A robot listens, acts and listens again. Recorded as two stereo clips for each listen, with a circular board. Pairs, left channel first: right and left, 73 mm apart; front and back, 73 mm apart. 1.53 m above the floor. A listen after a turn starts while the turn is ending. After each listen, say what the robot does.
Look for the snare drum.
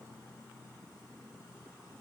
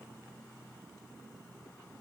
Keep listening.
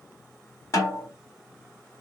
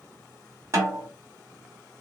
Turn 130° right.
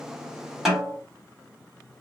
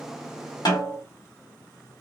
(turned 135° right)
Facing the snare drum.